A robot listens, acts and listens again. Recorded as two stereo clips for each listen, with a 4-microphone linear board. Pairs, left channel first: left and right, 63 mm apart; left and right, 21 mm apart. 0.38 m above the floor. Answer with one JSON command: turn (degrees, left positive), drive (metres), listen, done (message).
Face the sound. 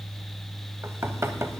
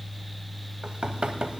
{"turn": -45}
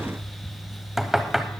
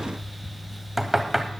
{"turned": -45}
{"done": "Facing the knocking."}